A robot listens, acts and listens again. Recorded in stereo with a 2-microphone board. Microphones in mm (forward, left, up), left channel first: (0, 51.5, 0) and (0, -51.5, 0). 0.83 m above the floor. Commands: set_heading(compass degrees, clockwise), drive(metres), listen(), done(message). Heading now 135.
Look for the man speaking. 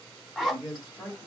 set_heading(150)
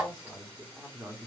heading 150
set_heading(175)
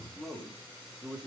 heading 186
set_heading(201)
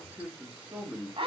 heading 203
set_heading(223)
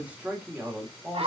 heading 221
set_heading(241)
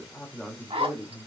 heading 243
done("Found it: a man speaking, straight ahead.")